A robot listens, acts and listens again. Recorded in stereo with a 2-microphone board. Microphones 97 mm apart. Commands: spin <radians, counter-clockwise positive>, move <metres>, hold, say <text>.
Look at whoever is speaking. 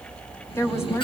spin 0.44
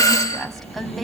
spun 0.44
say Found it: a woman speaking, straight ahead.